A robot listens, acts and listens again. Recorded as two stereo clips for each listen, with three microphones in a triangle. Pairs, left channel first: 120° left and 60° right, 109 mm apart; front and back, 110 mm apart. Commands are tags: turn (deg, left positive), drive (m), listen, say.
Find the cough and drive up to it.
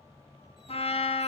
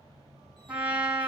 <listen/>
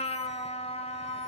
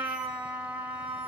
<listen/>
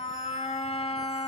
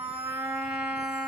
<say>I can't make out a cough to turn to.</say>